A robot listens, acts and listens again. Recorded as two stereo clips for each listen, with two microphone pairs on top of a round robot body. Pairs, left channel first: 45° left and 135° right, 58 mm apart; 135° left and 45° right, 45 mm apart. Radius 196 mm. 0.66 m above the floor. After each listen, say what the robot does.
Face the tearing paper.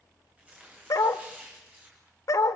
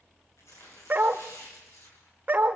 Turn 155° left.
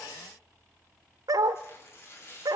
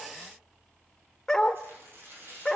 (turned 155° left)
Found it: tearing paper, straight ahead, over 4 m away.